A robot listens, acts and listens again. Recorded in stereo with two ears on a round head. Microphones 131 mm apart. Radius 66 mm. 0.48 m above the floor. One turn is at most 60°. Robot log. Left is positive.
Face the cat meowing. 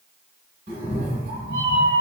cmd yaw -60
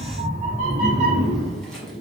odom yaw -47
note: So it is at 30° right.
cmd yaw -30
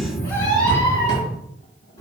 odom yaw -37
note: The cat meowing is now 25° left.
cmd yaw +25
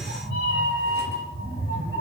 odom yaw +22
end: Facing the cat meowing, 2 to 4 m away.